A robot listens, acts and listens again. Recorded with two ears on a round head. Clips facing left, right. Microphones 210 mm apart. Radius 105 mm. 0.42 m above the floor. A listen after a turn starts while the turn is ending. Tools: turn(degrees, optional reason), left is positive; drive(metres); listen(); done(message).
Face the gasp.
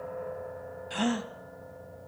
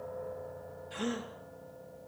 turn(degrees=75, reason="The gasp: about 75° left or 105° left.")
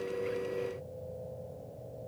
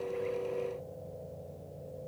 listen()
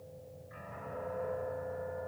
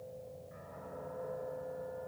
done("I heard a gasp, but can't make it out now. It was about straight ahead or 30° left.")